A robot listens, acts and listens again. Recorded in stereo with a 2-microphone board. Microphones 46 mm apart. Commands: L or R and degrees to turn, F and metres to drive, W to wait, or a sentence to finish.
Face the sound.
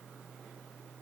W
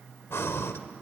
L65
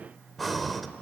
Facing the breathing, 1 to 2 m away.